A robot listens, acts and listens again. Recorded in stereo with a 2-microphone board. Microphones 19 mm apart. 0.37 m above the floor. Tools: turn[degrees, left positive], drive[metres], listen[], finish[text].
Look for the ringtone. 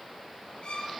Action: listen[]
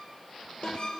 Action: turn[90]
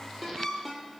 Thought: So it is at 10° right.
Action: turn[-10]
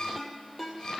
Action: finish[Found it: a ringtone, straight ahead, over 4 m away.]